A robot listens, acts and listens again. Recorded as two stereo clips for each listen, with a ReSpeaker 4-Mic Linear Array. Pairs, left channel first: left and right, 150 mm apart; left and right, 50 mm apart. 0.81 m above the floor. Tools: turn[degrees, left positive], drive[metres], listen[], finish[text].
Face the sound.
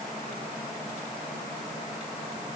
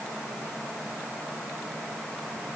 Action: listen[]
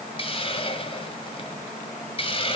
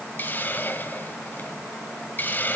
Thought: The hiss: about 35° left or 145° left.
Action: turn[35]
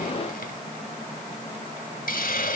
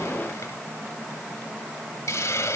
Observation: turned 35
Thought: So it is at 105° left.
Action: turn[105]
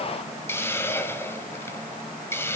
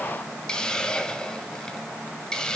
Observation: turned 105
Thought: The hiss is now 15° left.
Action: turn[15]
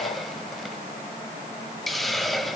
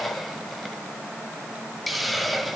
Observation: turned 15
Action: finish[Found it: a hiss, straight ahead, 1 to 2 m away.]